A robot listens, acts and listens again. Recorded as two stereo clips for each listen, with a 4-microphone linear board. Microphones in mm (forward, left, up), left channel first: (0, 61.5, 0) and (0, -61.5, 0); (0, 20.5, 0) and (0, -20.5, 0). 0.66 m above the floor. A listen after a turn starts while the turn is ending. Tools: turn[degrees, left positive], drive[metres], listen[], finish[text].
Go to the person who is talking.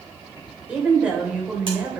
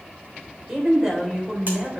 Action: turn[-30]
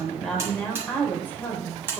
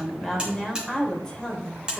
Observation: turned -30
Thought: So it is at 20° left.
Action: turn[20]
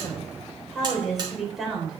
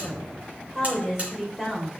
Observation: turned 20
Action: drive[1.0]
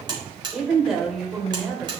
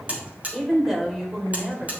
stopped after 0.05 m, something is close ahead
Action: finish[Something is in my way. I am facing the woman speaking but have not reached it.]